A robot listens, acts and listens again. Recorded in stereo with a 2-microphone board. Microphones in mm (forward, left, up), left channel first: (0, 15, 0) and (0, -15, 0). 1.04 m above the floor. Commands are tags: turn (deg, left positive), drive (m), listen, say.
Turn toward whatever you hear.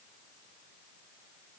<listen/>
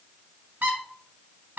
<turn deg="-90"/>
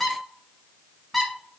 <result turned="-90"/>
<turn deg="10"/>
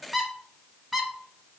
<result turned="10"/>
<say>Facing the squeak, under 1 m away.</say>